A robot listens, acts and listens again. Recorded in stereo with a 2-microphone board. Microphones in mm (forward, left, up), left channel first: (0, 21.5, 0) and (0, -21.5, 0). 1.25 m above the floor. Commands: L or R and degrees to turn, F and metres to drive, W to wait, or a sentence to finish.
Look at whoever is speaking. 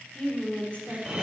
L30
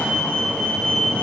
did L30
W
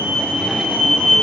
W
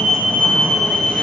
I heard a woman speaking, but can't make it out now. It was about straight ahead or 120° left.